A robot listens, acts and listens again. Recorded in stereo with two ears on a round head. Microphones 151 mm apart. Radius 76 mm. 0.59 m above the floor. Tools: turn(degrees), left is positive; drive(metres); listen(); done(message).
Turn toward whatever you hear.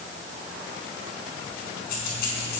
turn(degrees=60)
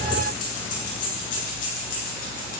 turn(degrees=55)
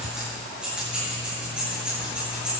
done("Found it: keys jangling, straight ahead, over 4 m away.")